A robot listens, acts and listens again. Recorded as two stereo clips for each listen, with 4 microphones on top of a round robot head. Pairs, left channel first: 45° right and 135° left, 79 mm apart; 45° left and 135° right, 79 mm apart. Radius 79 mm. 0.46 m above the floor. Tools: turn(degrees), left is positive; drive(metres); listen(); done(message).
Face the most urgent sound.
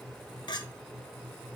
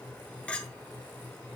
listen()
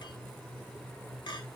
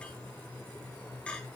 listen()
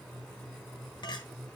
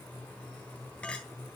done("I can't make out anything urgent, only a clink.")